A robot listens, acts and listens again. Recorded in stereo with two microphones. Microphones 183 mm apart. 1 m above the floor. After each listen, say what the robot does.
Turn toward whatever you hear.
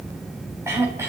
Turn 30° right.
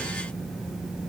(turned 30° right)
Keep listening.
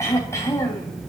Turn 15° left.
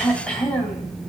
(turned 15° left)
Facing the throat clearing, 2 to 4 m away.